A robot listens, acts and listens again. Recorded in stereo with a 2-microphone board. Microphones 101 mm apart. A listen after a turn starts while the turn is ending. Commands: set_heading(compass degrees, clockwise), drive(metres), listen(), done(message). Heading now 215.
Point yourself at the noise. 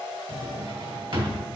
set_heading(275)
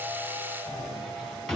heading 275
done("Found it: a drawer, straight ahead.")